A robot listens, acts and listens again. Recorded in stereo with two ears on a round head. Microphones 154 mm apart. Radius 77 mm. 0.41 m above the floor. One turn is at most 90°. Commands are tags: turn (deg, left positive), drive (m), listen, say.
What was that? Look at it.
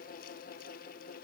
<listen/>
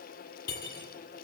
<turn deg="60"/>
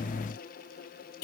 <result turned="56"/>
<turn deg="65"/>
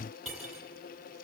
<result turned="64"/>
<say>Facing the cutlery clinking.</say>